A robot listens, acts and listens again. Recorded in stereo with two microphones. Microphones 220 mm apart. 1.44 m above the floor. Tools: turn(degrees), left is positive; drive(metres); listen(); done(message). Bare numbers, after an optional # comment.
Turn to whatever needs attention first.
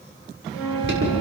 # The alarm: about 55° right or 125° right.
turn(-55)
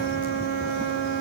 listen()
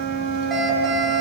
done("Found it: an alarm, straight ahead, over 4 m away.")